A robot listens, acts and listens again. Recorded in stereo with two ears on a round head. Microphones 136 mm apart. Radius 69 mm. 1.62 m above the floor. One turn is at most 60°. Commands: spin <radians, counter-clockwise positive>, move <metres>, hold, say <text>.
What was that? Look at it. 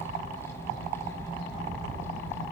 hold
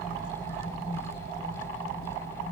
hold
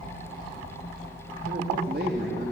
spin -1.05
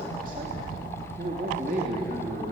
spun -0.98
spin -0.96
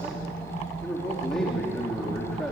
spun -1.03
say Facing the man speaking, 2 to 4 m away.